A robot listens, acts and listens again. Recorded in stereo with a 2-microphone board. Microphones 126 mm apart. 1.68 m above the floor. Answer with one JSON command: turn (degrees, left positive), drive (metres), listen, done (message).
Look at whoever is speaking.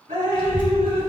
{"turn": 40}
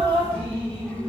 {"turn": 15}
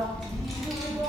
{"done": "Found it: a child speaking, straight ahead, under 1 m away."}